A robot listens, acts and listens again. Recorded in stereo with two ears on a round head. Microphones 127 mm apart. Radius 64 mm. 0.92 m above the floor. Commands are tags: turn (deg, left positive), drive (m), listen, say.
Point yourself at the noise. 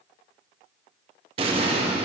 <turn deg="-40"/>
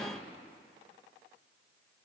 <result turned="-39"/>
<listen/>
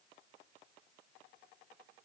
<say>I heard an explosion, but can't make it out now. It was about straight ahead or 100° right.</say>